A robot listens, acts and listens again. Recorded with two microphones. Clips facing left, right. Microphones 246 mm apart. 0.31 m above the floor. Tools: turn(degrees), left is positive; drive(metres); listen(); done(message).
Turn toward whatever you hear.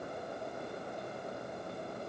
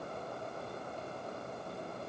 listen()
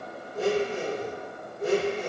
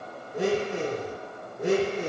turn(degrees=-90)
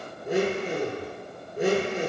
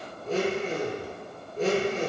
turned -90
turn(degrees=15)
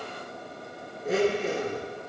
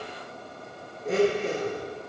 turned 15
done("Found it: a blender, straight ahead.")